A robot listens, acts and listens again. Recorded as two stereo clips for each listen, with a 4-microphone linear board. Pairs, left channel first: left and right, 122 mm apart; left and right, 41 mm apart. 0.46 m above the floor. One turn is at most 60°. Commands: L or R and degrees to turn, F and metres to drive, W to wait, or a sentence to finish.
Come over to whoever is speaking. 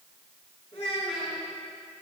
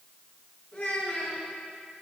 L55
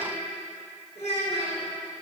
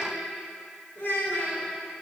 L60
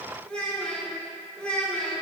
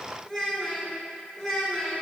L10
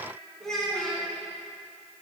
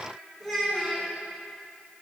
F1.0
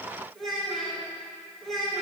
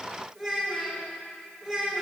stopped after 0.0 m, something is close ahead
Something is in my way. I am facing the child speaking but have not reached it.